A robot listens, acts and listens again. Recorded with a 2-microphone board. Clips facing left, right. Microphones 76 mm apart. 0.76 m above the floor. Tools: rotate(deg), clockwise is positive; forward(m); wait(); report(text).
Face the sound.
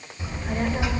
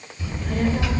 rotate(-20)
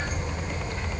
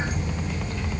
rotate(-35)
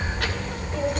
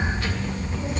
rotate(-125)
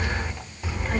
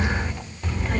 rotate(-10)
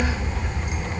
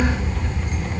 rotate(-15)
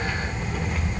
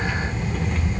report("Facing the child speaking.")